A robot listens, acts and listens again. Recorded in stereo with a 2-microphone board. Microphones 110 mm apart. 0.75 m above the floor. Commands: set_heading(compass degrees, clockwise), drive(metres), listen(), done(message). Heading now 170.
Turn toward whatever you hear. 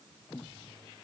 listen()
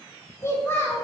set_heading(150)
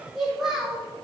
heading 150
done("Found it: a child speaking, straight ahead, 2 to 4 m away.")